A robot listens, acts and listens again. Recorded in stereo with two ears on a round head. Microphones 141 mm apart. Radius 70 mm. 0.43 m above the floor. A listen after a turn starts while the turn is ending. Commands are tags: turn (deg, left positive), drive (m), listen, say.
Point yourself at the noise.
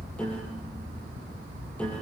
<turn deg="30"/>
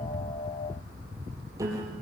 <turn deg="-20"/>
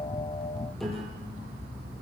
<say>Facing the piano, over 4 m away.</say>